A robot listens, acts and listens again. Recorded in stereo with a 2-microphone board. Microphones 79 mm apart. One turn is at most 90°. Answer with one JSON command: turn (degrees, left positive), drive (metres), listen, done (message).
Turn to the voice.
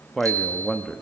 {"turn": 30}
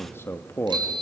{"turn": 90}
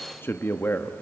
{"turn": 30}
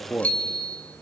{"turn": 20}
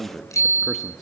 {"done": "Found it: a man speaking, straight ahead, under 1 m away."}